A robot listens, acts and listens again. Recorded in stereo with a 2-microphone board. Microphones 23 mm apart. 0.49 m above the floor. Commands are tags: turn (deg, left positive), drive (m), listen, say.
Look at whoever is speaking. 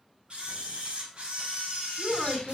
<turn deg="-35"/>
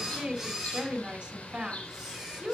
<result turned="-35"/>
<turn deg="-110"/>
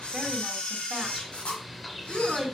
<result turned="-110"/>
<turn deg="-20"/>
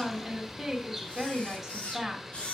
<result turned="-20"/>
<say>Found it: a woman speaking, straight ahead, 2 to 4 m away.</say>